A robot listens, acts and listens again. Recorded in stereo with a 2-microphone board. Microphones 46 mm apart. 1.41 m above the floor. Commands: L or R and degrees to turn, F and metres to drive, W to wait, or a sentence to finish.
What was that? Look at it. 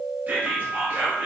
R40
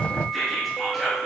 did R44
Found it: whispering, straight ahead.